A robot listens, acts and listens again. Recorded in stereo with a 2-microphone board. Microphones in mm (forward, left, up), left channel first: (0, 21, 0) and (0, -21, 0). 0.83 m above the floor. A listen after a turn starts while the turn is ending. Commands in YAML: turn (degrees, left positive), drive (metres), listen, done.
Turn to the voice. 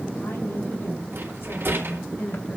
turn: 70
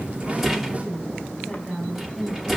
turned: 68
done: "Facing the woman speaking."